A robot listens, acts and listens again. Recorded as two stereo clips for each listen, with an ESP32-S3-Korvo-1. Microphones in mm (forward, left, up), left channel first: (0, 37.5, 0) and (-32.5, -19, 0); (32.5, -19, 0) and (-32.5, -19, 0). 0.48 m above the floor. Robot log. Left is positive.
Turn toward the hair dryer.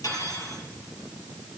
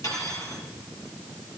cmd idle
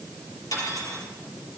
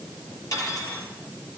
cmd idle
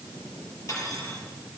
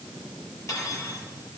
end: I can't make out a hair dryer to turn to.